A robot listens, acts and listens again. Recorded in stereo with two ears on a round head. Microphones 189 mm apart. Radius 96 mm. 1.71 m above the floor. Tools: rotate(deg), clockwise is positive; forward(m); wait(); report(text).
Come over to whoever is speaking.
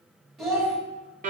rotate(-30)
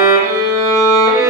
wait()
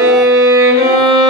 wait()
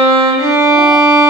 report("I heard a child speaking, but can't make it out now. It was about 30° right or 150° left. I did not reach it.")